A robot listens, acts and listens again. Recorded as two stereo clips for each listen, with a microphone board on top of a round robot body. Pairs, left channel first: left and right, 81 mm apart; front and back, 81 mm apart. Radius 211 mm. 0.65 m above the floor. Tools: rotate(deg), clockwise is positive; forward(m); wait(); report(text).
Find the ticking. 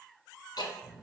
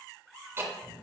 rotate(-120)
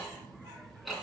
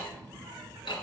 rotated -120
report("Facing the ticking.")